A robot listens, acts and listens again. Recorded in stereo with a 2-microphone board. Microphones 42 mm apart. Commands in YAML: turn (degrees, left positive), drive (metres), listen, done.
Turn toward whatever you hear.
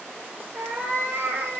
turn: -50
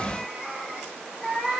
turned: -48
done: "Found it: a cat meowing, straight ahead, over 4 m away."